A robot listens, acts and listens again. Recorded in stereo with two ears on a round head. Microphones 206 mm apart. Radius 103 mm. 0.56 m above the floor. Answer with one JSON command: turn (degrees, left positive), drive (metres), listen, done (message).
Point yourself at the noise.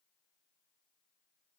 {"listen": true}
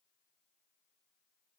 {"listen": true}
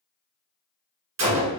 {"turn": -90}
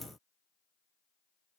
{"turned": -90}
{"done": "I heard a gunshot from this way, but can't make it out now."}